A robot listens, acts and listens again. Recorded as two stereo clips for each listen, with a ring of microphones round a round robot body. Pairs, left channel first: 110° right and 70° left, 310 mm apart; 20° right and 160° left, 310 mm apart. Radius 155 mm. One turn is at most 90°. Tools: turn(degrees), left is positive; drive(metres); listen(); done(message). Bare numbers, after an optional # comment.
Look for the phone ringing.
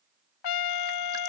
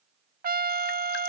listen()
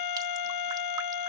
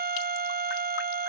listen()
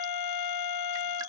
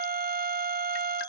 done("I can't make out a phone ringing, only a trumpet.")